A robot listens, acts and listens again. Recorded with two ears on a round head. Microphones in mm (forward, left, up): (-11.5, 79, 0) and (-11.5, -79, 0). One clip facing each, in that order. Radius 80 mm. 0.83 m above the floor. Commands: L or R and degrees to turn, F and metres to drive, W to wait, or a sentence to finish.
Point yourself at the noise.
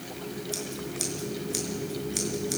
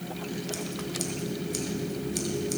L30
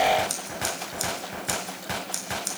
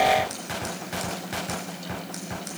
L140
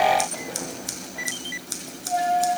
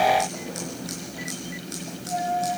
L35
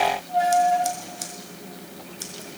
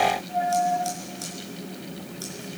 L20
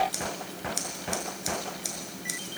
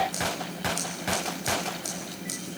Found it: scissors, straight ahead.